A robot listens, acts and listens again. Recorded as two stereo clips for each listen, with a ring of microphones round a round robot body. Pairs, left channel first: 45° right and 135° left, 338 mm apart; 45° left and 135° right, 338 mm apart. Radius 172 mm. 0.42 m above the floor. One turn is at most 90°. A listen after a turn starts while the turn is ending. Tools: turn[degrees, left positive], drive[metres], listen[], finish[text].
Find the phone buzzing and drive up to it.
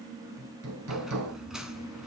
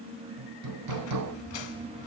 Action: listen[]
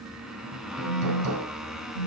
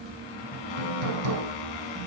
Thought: The phone buzzing: 120° left.
Action: turn[90]
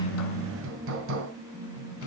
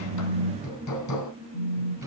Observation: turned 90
Thought: The phone buzzing is now 20° left.
Action: turn[20]
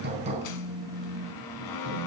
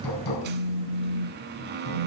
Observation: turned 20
Action: drive[1.0]
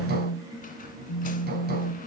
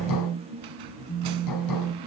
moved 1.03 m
Action: drive[1.0]
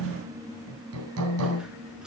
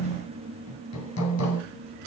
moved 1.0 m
Thought: The phone buzzing is now 20° right.
Action: turn[-20]
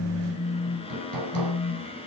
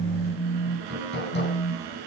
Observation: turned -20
Action: drive[1.0]
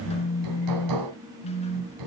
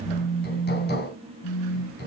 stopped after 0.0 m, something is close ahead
Action: finish[I am next to the phone buzzing.]